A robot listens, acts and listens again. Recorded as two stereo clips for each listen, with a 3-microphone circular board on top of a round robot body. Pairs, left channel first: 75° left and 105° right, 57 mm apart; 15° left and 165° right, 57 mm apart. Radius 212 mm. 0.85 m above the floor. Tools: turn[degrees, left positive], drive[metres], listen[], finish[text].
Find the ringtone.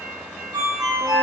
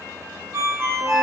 Thought: The ringtone: 115° right.
Action: turn[-115]
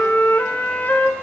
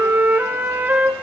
Action: listen[]
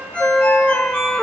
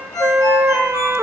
Action: finish[Found it: a ringtone, straight ahead.]